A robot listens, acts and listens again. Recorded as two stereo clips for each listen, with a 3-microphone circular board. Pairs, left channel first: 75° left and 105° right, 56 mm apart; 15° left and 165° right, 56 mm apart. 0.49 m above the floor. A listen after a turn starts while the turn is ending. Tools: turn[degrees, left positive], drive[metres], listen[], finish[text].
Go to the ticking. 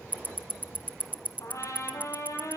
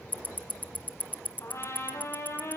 Thought: The ticking: 45° right.
Action: turn[-45]
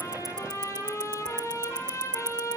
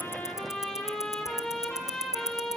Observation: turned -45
Action: drive[1.0]
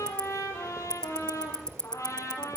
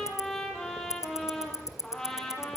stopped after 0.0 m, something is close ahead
Action: finish[Something is in my way. I am facing the ticking but have not reached it.]